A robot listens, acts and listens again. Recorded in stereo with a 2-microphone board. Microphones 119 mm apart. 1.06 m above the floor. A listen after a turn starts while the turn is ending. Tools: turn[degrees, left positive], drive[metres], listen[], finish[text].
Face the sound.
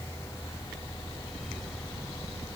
Action: listen[]
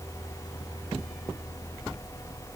Action: listen[]
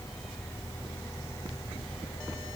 Action: finish[I can't make out anything to turn to.]